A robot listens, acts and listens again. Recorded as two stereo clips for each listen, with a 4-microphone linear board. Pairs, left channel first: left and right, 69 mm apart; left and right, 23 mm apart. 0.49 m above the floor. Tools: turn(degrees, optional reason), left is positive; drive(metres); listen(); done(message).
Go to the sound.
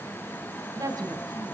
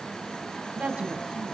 turn(degrees=-70, reason="The woman speaking: about 70° right or 110° right.")
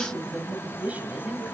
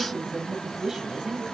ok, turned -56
turn(degrees=-25, reason="So it is at 25° right.")
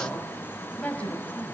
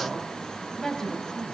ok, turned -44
turn(degrees=20, reason="The woman speaking is now 20° left.")
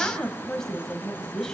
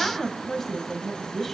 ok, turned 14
turn(degrees=10, reason="The woman speaking is now 10° left.")
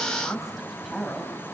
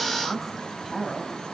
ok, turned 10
drive(metres=1.0)
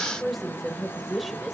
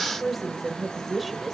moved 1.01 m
drive(metres=1.0)
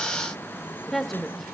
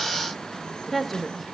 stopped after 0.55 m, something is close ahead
done("I am next to the woman speaking.")